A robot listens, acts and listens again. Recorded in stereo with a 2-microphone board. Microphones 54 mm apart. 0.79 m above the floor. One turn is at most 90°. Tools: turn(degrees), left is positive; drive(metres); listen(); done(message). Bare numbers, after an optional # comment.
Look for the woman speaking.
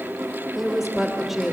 turn(-30)
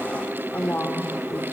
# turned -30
# So it is at 35° left.
turn(35)
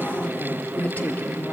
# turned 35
# The woman speaking is now 30° left.
turn(30)
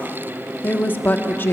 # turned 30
# The woman speaking is now 45° left.
turn(45)
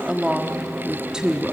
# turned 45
# The woman speaking is now 15° right.
turn(-15)
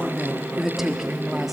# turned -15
done("Facing the woman speaking, 1 to 2 m away.")